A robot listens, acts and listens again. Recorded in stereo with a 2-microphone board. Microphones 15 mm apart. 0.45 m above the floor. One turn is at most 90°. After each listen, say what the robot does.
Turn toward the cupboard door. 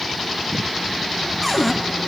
Turn 30° right.
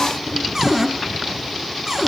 Turn 90° right.
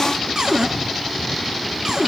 Turn 35° right.
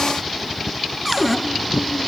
Found it: a cupboard door, straight ahead.